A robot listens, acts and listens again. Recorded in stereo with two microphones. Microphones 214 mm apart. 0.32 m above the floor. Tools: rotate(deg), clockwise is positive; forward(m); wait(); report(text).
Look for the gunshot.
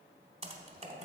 wait()
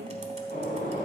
rotate(-45)
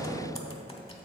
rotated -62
rotate(15)
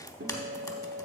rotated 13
report("I heard a gunshot from this way, but can't make it out now.")